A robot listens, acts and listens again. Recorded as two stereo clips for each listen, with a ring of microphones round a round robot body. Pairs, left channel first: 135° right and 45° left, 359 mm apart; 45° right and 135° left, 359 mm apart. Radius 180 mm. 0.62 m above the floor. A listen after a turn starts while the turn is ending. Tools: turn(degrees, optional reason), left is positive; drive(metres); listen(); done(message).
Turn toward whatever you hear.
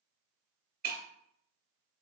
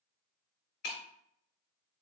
turn(degrees=-20, reason="The breaking glass: 20° right.")
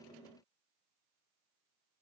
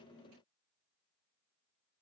done("Facing where the breaking glass came from. I can't hear it now.")